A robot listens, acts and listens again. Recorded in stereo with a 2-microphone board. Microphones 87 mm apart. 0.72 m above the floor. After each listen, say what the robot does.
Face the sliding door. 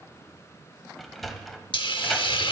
Turn 30° left.
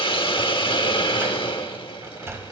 Turn 30° right.
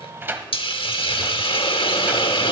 Turn 25° right.
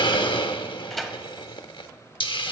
Facing the sliding door, 1 to 2 m away.